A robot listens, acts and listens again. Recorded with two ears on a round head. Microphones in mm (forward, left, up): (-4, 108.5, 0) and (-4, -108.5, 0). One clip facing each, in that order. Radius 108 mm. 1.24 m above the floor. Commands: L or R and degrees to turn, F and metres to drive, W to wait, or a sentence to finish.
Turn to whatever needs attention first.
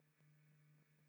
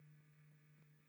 W
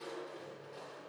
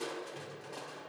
W
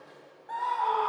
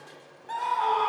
R45
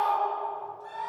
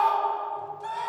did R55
R85
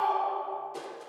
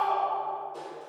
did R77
R10
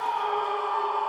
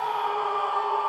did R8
Found it: a scream, straight ahead, 2 to 4 m away.